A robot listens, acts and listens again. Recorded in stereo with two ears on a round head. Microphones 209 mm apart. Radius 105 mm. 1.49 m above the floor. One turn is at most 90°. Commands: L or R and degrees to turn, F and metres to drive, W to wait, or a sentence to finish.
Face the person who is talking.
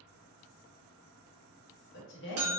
L55
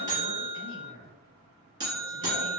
L65
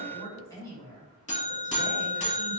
L15
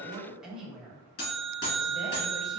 Facing the woman speaking, 1 to 2 m away.